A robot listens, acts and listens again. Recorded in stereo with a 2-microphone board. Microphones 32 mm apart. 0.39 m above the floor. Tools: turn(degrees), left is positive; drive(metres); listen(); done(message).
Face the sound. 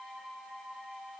listen()
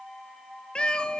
turn(degrees=35)
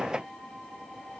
listen()
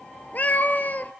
turn(degrees=115)
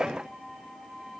listen()
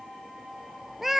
turn(degrees=-10)
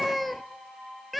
done("Found it: a cat meowing, straight ahead.")